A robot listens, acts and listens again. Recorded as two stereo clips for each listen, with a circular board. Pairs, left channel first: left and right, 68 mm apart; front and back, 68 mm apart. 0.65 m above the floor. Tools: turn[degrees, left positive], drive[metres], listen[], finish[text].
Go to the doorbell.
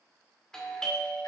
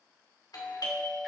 Thought: The doorbell: 10° left.
Action: turn[10]
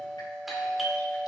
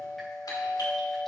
Action: drive[1.0]
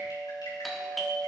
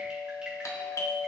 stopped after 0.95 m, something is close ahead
Action: finish[I am next to the doorbell.]